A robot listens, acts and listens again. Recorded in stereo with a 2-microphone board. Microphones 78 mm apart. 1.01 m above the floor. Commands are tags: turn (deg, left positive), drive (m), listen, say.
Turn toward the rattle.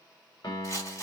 <turn deg="40"/>
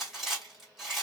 <say>Found it: a rattle, straight ahead.</say>